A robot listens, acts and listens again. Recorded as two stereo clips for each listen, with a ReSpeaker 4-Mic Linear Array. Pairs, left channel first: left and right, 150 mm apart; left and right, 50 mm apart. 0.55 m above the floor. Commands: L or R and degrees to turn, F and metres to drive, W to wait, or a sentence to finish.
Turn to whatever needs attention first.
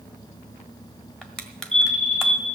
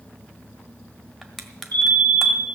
L40
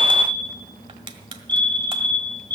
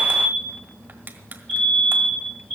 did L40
L10
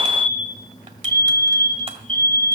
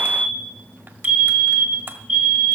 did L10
Found it: a fire alarm, straight ahead.